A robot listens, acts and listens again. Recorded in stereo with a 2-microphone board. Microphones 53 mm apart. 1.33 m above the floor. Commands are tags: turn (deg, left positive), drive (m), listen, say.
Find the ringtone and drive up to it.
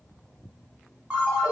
<turn deg="-25"/>
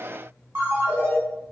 <turn deg="-130"/>
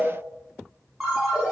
<turn deg="-20"/>
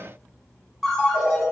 <drive m="1.0"/>
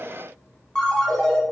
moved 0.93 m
<drive m="1.0"/>
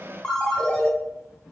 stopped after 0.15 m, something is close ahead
<turn deg="10"/>
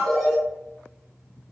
<say>Arrived at the ringtone, straight ahead.</say>